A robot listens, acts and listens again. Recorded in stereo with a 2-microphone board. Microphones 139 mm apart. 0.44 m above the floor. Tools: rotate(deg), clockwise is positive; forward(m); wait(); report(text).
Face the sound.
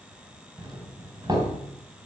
rotate(30)
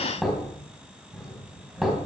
report("Facing the doorbell.")